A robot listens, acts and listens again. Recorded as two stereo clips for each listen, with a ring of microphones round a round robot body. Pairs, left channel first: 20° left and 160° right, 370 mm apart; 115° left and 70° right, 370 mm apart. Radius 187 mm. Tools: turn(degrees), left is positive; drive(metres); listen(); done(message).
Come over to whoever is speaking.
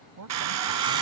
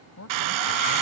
turn(degrees=160)
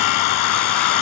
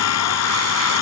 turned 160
listen()
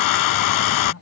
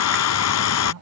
turn(degrees=-25)
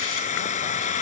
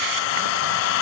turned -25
listen()
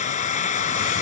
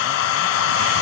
listen()
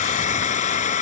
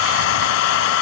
done("Facing where the man speaking came from. I can't hear it now. I did not reach it.")